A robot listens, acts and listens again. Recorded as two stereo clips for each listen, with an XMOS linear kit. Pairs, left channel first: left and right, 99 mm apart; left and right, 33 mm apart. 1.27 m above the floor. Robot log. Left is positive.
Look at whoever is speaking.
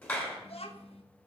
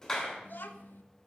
cmd yaw +90
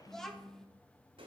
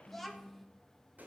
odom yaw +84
end: Found it: a child speaking, straight ahead.